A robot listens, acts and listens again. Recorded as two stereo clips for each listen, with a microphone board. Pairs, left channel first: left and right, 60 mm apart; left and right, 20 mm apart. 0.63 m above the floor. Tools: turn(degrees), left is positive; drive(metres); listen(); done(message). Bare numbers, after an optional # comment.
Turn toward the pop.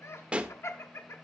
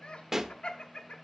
# The pop: about 20° right or 160° right.
turn(-20)
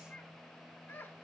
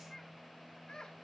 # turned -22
listen()
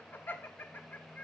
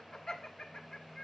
done("I heard a pop, but can't make it out now. It was about 5° left or 140° right.")